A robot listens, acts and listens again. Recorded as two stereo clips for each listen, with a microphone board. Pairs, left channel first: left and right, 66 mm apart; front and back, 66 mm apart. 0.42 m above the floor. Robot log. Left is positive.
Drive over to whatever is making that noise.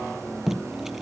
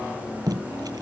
note: The tape being pulled: 175° right.
cmd yaw -175
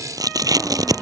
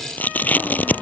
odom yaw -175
note: The tape being pulled is now 65° right.
cmd yaw -65
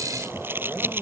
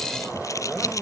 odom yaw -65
note: The tape being pulled is now 35° right.
cmd yaw -35
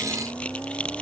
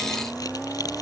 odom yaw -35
cmd idle
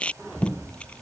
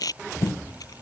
note: The tape being pulled is now 15° left.
cmd yaw +15
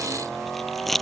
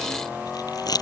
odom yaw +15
cmd fwd 1.0
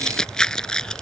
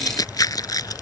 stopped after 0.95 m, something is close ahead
note: The tape being pulled is now 10° left.
cmd yaw +10
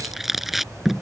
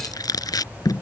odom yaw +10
end: Arrived at the tape being pulled, straight ahead.